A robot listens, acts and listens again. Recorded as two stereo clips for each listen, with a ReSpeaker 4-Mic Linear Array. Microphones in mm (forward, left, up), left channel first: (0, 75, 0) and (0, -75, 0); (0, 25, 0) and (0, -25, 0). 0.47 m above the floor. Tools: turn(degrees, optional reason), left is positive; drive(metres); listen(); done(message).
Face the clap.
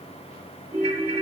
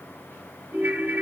listen()
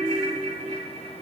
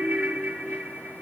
listen()
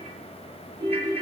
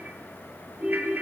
done("I can't make out a clap, only a ringtone.")